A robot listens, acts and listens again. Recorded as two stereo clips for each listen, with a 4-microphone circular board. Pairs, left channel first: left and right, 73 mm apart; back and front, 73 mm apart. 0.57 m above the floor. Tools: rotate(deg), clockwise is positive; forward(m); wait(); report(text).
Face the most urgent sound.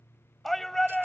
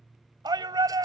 report("Facing the shout.")